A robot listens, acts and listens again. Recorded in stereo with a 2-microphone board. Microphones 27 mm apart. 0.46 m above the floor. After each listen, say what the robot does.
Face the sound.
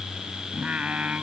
Turn 70° right.
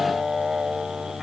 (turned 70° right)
Turn 25° right.
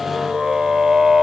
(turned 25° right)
Turn 20° right.
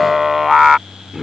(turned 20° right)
Turn 15° right.
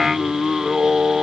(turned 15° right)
Turn 20° right.
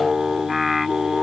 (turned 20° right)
Facing the singing.